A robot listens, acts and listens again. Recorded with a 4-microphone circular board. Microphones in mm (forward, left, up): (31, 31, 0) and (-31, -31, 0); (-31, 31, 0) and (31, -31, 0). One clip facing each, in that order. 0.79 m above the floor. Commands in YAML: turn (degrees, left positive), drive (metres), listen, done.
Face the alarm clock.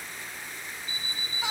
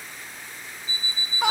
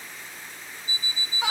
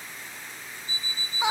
turn: 50
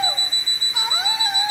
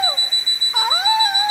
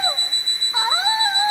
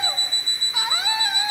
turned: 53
done: "Found it: an alarm clock, straight ahead, 1 to 2 m away."